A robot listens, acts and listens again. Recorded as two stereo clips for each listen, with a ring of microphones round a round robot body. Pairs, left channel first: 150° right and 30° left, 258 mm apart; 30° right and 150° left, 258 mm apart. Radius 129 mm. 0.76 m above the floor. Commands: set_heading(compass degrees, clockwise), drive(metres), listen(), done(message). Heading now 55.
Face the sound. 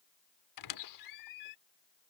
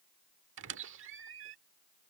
set_heading(220)
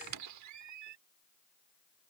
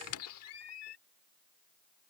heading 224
done("Facing the squeak.")